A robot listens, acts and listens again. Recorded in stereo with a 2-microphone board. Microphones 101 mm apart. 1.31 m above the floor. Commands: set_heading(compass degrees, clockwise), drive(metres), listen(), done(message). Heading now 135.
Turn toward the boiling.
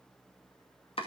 listen()
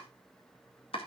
listen()
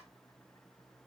done("I can't make out boiling to turn to.")